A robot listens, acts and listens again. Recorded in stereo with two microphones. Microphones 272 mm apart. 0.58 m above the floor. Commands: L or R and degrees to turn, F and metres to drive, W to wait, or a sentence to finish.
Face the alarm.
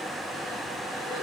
W
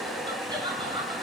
W
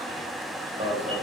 R20
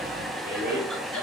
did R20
W
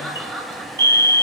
R135
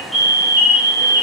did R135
Found it: an alarm, straight ahead.